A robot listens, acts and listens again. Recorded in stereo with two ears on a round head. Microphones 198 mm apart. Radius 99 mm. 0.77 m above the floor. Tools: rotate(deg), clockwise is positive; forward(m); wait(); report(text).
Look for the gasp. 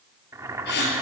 rotate(-50)
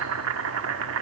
wait()
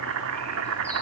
report("I heard a gasp, but can't make it out now. It was about straight ahead or 80° left.")